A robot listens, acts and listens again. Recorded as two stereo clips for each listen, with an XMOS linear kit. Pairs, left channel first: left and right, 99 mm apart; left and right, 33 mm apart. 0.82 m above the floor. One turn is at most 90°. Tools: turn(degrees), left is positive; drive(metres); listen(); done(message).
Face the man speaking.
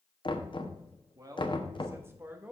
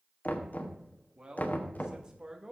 turn(degrees=-15)
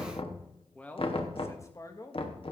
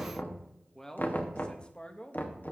turn(degrees=40)
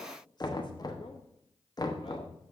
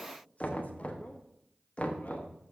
listen()
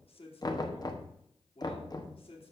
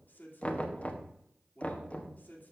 turn(degrees=60)
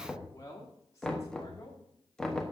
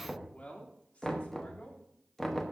turn(degrees=30)
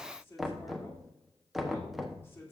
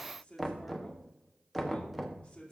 turn(degrees=25)
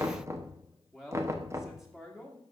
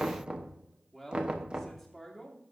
done("Found it: a man speaking, straight ahead.")